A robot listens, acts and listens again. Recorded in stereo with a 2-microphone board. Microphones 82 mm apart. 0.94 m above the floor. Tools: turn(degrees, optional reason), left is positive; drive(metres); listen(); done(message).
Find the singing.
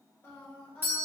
turn(degrees=30)
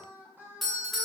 turn(degrees=-25, reason="So it is at 25° right.")
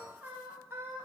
turn(degrees=-30, reason="The singing is now 30° right.")
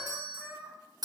turn(degrees=-20, reason="The singing is now 20° right.")
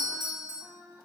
turn(degrees=-25, reason="The singing is now 25° right.")
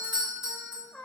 turn(degrees=15, reason="The singing is now 15° left.")
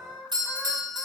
done("Found it: singing, straight ahead, 1 to 2 m away.")